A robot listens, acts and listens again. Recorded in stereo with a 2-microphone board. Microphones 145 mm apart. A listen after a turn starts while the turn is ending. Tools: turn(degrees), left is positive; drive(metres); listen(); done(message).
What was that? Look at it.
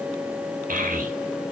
turn(degrees=-70)
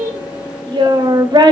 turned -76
turn(degrees=-30)
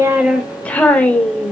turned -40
turn(degrees=10)
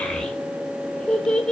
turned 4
done("Facing the child speaking, 2 to 4 m away.")